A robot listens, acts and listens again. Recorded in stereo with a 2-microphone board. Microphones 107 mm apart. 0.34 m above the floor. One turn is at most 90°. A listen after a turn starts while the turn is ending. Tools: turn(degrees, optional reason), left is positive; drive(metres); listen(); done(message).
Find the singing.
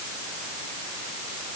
listen()
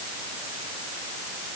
listen()
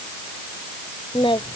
turn(degrees=50, reason="The singing: about 50° left or 130° left.")
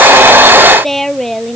done("Facing the singing.")